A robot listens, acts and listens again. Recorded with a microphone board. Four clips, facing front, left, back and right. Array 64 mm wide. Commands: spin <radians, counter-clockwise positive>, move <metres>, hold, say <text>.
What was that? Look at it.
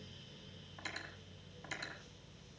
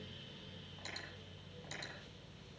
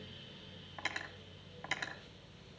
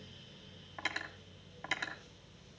spin -2.36
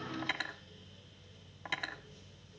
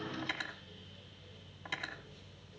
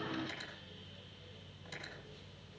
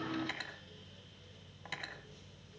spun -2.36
say Found it: cutlery clinking, straight ahead.